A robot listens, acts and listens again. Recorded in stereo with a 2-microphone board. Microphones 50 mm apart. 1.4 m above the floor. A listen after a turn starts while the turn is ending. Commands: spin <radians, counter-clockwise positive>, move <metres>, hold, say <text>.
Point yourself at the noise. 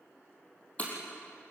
spin 0.44
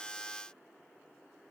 hold
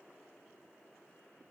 say I heard breaking glass, but can't make it out now. It was about straight ahead or 130° left.